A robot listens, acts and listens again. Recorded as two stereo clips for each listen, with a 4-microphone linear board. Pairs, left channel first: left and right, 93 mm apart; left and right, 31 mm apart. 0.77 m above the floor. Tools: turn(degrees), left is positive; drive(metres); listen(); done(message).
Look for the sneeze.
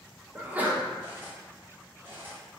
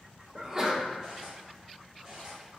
turn(degrees=-15)
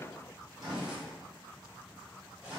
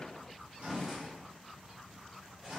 listen()
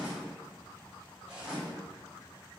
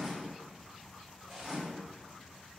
done("I heard a sneeze, but can't make it out now. It was about straight ahead or 150° right.")